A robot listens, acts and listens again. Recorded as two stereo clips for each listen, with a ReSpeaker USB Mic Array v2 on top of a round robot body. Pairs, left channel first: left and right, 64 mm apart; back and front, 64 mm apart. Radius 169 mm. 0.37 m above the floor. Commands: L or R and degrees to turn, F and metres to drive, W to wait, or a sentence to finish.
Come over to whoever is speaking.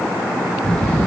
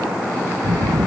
L10
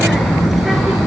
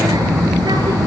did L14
F1.0
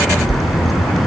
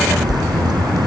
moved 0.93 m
F1.0
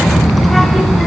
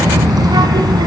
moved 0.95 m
F1.0
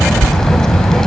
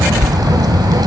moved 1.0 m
L10
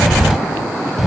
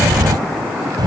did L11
F1.0
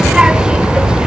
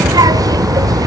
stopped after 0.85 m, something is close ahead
R15
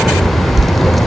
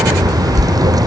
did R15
I am next to the child speaking.